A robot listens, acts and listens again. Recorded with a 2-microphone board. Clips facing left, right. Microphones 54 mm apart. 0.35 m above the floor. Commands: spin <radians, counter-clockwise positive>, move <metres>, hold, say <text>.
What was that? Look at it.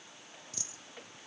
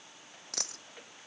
spin -1.13
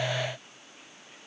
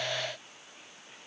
hold
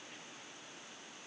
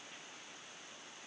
say I heard a dropped coin, but can't make it out now. It was about straight ahead or 50° right.